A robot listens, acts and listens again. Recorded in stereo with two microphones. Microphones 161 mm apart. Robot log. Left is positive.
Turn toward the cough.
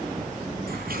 cmd idle
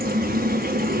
cmd idle
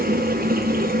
end: I can't make out a cough to turn to.